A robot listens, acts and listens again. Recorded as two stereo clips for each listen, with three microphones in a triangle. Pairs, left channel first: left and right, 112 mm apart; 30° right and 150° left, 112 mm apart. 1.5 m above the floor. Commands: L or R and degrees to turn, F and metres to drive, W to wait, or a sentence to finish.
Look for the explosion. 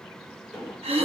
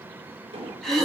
R175
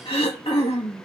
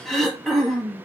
Facing where the explosion came from. I can't hear it now.